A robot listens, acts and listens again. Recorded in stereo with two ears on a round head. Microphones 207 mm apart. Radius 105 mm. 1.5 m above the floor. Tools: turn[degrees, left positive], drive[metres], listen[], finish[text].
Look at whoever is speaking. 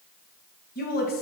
Thought: The woman speaking: about 40° left or 140° left.
Action: turn[40]
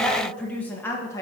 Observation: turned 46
Thought: So it is at 15° left.
Action: turn[15]
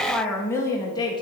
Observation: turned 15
Thought: The woman speaking is now 20° left.
Action: turn[20]
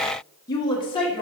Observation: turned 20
Thought: The woman speaking is now 25° left.
Action: turn[25]
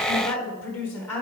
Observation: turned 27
Thought: The woman speaking is now 10° left.
Action: turn[10]
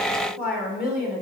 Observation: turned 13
Action: finish[Found it: a woman speaking, straight ahead, 1 to 2 m away.]